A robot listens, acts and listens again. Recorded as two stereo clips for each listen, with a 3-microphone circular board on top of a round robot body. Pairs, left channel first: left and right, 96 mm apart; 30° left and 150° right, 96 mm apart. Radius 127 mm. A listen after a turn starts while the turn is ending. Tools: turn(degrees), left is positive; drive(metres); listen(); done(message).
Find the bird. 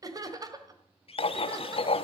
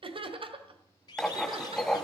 turn(degrees=75)
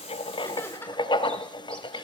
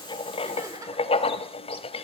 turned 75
listen()
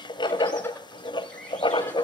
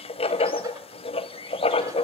listen()
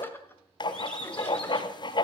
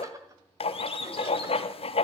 done("Found it: a bird, straight ahead.")